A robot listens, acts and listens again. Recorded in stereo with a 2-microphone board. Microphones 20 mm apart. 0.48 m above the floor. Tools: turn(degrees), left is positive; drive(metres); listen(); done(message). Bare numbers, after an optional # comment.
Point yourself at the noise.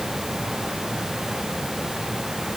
listen()
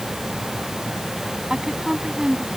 # The woman speaking: about 45° right or 135° right.
turn(-45)
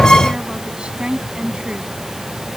# So it is at 105° right.
turn(-105)
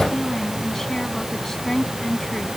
# The woman speaking is now 25° left.
turn(25)
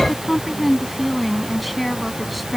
done("Facing the woman speaking.")